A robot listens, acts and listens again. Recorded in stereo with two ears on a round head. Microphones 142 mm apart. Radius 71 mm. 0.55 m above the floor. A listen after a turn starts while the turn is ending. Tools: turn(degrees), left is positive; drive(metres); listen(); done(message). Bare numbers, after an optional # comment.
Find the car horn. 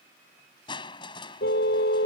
# The car horn: about 75° left or 105° left.
turn(75)
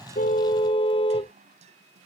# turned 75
# So it is at 30° left.
turn(30)
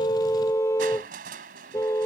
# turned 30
# The car horn is now 20° left.
turn(20)
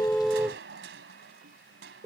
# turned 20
# The car horn is now 10° right.
turn(-10)
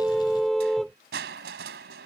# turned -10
done("Found it: a car horn, straight ahead.")